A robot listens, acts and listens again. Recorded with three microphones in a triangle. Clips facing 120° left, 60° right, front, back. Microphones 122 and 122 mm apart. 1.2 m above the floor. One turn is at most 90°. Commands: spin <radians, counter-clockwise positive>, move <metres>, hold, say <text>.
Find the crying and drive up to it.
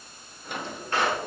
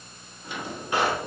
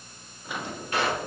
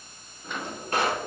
hold
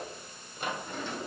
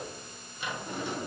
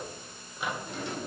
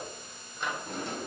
hold
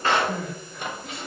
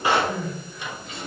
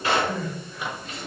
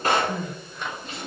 spin 1.57
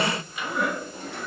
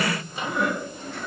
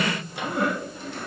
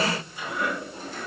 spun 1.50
spin 0.61
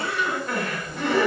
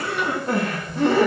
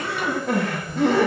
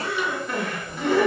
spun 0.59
move 1.0
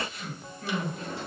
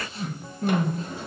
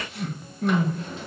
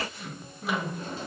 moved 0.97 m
move 1.0
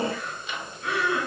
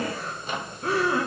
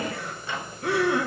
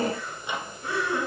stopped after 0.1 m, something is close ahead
spin -0.17
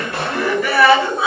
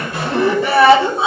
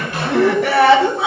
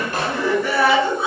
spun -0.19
say Arrived at the crying, straight ahead.